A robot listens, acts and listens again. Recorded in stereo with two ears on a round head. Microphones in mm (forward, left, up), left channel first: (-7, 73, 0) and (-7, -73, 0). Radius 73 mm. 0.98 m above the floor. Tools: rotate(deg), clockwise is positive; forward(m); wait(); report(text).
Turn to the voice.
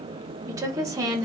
rotate(20)
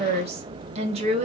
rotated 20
rotate(140)
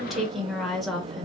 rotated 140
report("Facing the woman speaking, 1 to 2 m away.")